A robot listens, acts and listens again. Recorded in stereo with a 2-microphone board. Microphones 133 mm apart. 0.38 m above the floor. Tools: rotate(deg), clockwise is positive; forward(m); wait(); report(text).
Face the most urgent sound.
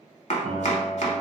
wait()
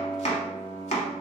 wait()
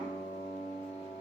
report("I can't make out anything urgent to turn to.")